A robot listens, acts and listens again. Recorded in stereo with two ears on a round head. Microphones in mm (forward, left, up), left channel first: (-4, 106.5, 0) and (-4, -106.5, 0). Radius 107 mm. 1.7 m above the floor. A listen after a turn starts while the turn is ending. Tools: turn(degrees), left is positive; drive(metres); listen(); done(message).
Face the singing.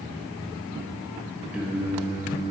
turn(degrees=-20)
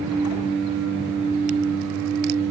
turn(degrees=-110)
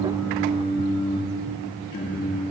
turn(degrees=35)
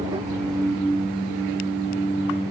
done("Facing the singing.")